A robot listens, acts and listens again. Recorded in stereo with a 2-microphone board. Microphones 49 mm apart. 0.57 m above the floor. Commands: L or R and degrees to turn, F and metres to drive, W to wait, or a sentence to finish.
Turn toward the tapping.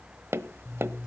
R55
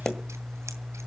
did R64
L10
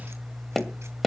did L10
Facing the tapping.